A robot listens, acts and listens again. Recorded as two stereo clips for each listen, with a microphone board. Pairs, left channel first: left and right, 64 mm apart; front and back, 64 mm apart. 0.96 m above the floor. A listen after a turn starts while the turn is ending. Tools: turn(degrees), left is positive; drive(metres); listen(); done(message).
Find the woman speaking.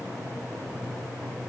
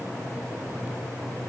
listen()
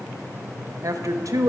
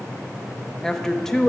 turn(degrees=-80)
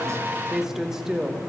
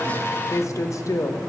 turn(degrees=-10)
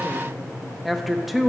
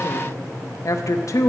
done("Found it: a woman speaking, straight ahead.")